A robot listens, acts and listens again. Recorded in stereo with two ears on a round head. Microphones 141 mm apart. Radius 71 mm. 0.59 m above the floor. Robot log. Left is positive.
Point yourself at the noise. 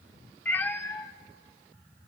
cmd yaw +30
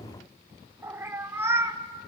note: So it is at 15° right.
cmd yaw -15
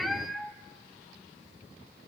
end: Found it: a cat meowing, straight ahead.